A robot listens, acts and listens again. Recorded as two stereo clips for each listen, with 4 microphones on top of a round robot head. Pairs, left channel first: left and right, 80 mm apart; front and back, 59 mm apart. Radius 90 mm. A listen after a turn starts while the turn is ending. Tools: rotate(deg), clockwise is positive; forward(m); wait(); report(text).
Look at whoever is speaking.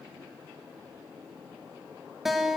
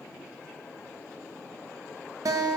wait()
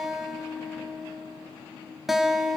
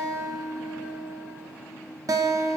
wait()
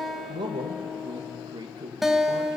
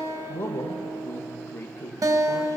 rotate(55)
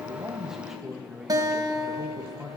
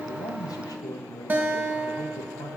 report("Facing the man speaking, 1 to 2 m away.")